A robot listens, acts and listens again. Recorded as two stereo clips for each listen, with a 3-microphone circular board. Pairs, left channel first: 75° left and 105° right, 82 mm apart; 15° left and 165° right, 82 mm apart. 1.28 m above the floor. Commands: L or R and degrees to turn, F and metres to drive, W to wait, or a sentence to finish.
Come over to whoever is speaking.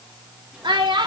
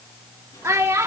R110
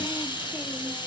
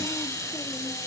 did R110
W
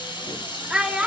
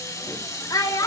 R25
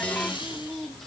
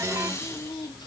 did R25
W
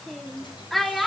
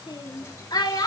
R10
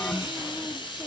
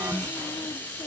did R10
W
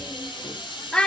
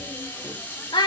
F1.0
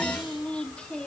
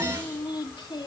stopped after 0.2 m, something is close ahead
Blocked. The child speaking is further on, straight ahead.